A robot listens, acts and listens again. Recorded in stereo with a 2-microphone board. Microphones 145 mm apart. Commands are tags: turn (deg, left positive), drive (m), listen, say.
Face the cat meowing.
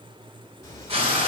<turn deg="25"/>
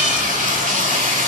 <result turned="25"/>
<listen/>
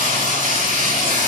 <listen/>
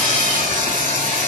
<say>I heard a cat meowing, but can't make it out now. It was about straight ahead or 130° left.</say>